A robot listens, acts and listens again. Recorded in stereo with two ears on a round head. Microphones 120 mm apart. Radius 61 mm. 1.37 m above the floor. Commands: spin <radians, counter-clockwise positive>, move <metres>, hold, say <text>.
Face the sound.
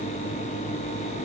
hold
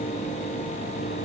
hold
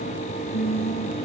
spin 1.57
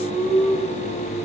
say Found it: singing, straight ahead.